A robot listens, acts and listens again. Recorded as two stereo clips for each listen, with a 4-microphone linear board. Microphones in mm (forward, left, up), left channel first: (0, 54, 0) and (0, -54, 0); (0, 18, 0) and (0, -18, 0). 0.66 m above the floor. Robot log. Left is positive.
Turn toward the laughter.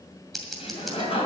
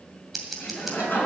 note: The laughter: about 65° left or 115° left.
cmd yaw +65
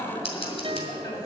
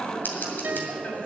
note: So it is at 50° left.
cmd yaw +50
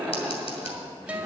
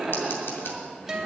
end: Found it: laughter, straight ahead, over 4 m away.